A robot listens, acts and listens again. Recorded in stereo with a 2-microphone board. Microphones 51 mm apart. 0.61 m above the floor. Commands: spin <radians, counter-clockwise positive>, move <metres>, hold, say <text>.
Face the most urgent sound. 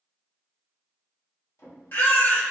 spin 0.79
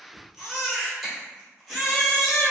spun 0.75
say Found it: a baby crying, straight ahead.